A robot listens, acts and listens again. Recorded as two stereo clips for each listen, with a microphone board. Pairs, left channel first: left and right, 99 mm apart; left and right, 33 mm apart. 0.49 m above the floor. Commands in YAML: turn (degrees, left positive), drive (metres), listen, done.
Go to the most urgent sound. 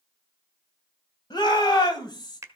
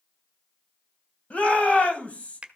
turn: 45
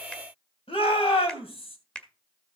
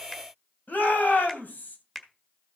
turn: 85
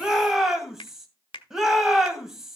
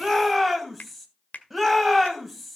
drive: 1.0
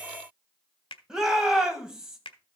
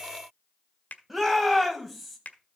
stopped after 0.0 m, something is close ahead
done: "Something is in my way. I am facing the shout but have not reached it."